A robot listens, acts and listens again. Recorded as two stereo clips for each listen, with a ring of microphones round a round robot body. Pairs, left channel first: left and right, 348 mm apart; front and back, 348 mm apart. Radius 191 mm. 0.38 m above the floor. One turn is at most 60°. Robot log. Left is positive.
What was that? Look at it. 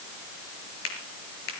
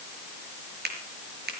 note: The finger snap: 115° left.
cmd yaw +60
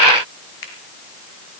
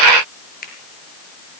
note: The finger snap is now 65° left.
cmd yaw +60
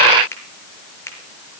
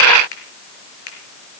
end: Facing the finger snap.